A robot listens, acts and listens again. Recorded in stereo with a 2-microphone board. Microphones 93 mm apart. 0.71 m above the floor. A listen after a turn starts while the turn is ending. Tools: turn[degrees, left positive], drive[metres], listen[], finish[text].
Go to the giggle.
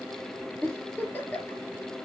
Thought: The giggle: about 20° left or 160° left.
Action: turn[20]
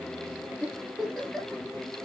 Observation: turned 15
Action: drive[1.0]
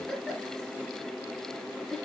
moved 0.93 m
Action: drive[1.0]
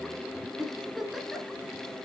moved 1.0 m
Action: drive[1.0]
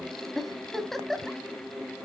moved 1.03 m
Action: drive[1.0]
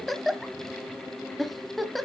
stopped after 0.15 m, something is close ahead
Action: finish[Arrived at the giggle, straight ahead.]